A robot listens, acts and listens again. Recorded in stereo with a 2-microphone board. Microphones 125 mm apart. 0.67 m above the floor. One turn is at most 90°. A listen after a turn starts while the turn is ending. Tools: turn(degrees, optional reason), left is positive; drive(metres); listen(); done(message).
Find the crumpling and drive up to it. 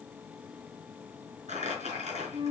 turn(degrees=-65, reason="The crumpling: about 65° right or 115° right.")
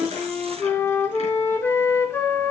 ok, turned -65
listen()
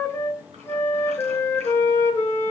listen()
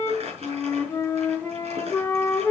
turn(degrees=-55, reason="So it is at 55° right.")
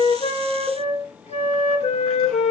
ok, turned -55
listen()
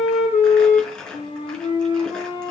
drive(metres=1.0)
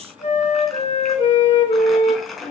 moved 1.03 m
drive(metres=1.0)
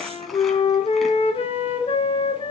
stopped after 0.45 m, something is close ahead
listen()
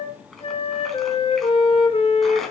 done("Something is in my way. I am facing the crumpling but have not reached it.")